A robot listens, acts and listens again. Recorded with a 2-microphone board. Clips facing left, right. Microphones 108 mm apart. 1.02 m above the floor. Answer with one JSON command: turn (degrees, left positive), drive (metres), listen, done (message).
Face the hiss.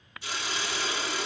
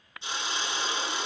{"turn": -25}
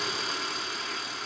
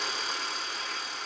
{"done": "Found it: a hiss, straight ahead, 2 to 4 m away."}